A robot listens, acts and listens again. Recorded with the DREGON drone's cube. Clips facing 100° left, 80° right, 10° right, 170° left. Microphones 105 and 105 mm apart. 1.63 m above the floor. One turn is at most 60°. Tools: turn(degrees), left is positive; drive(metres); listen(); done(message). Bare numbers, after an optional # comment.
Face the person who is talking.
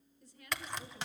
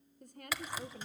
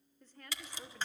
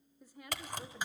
# The woman speaking: 110° right.
turn(-60)
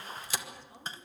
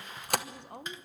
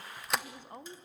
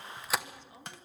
# The woman speaking is now 50° right.
turn(-50)
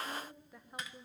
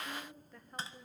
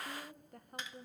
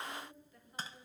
# The woman speaking is now 20° left.
turn(20)
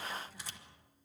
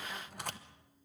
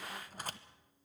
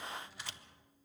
listen()
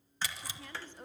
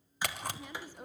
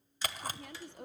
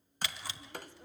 done("Found it: a woman speaking, straight ahead, 1 to 2 m away.")